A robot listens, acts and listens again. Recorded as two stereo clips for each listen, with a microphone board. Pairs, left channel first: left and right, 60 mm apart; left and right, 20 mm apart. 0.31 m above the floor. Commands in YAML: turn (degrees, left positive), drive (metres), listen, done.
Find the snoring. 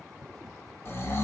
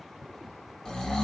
turn: 40
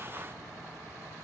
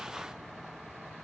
listen: true
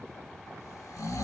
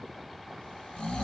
turn: 90
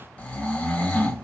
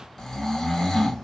turn: 25
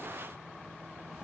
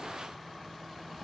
listen: true
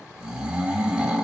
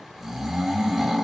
turn: -15
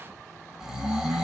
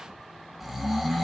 turn: -10
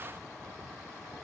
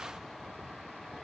listen: true
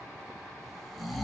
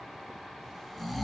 done: "Found it: snoring, straight ahead, under 1 m away."